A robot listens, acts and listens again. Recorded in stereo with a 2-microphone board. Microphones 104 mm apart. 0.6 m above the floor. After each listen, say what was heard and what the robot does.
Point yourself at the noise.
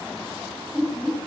Turn 30° right.
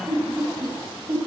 So it is at 135° right. Turn 135° right.
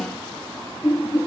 The laughter is now 25° left. Turn 25° left.
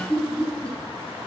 The laughter is now 10° left. Turn 10° left.
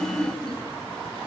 Found it: laughter, straight ahead, over 4 m away.